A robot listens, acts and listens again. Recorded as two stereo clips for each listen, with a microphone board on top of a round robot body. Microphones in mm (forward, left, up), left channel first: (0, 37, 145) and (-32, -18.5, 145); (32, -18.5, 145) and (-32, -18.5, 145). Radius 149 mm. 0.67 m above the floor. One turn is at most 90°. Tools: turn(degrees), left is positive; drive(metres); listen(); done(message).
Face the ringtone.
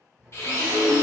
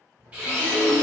turn(degrees=75)
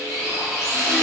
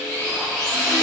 listen()
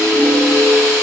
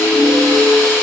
turn(degrees=-20)
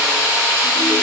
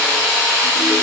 listen()
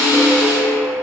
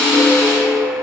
done("Found it: a ringtone, straight ahead, under 1 m away.")